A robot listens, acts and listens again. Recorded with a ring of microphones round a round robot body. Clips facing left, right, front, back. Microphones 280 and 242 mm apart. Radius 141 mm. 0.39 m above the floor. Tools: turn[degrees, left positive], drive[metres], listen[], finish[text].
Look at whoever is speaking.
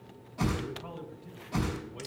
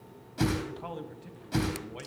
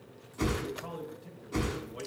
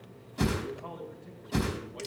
Thought: The man speaking: 85° right.
Action: turn[-85]
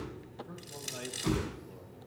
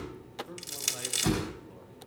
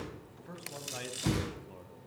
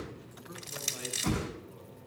Action: finish[Facing the man speaking.]